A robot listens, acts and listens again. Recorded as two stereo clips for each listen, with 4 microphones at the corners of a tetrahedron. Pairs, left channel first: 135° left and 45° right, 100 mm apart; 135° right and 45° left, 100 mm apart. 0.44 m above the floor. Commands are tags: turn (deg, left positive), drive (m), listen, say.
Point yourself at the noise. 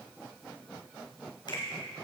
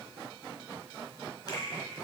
<turn deg="180"/>
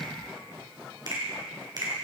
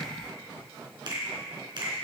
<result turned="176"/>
<say>Facing the finger snap, 2 to 4 m away.</say>